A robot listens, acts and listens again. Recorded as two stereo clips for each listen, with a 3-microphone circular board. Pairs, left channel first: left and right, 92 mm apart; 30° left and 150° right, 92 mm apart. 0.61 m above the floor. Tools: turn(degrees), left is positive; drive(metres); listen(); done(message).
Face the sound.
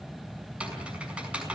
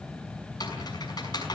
turn(degrees=-15)
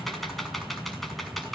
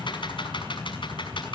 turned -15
done("Found it: typing on a keyboard, straight ahead.")